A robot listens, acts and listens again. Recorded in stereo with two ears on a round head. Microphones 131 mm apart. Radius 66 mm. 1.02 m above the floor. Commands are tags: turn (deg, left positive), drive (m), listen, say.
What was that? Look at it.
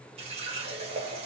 <turn deg="-45"/>
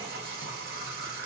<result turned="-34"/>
<turn deg="-100"/>
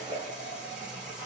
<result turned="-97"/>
<say>Facing the running tap.</say>